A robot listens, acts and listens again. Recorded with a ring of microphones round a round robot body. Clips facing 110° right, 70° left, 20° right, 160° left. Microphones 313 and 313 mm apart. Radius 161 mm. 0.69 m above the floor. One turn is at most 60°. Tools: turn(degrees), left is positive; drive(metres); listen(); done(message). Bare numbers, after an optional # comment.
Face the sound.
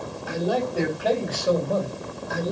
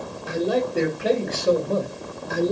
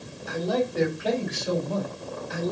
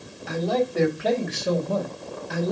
# The man speaking: 125° left.
turn(60)
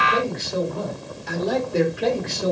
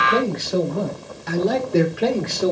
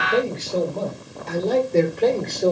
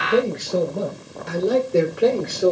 # The man speaking is now 75° left.
turn(60)
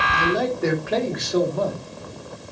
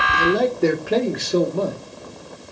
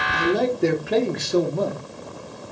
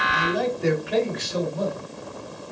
done("Found it: a man speaking, straight ahead.")